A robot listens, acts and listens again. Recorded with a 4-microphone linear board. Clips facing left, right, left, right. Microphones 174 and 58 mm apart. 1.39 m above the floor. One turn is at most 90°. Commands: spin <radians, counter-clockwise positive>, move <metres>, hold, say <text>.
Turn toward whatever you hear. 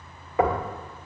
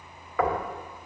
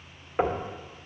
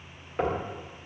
spin 0.44
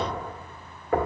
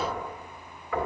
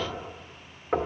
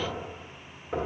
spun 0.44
spin 1.57
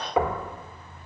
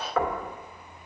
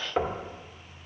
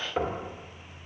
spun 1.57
spin 0.35
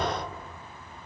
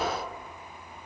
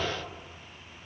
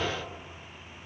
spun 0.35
say Found it: knocking, straight ahead, 1 to 2 m away.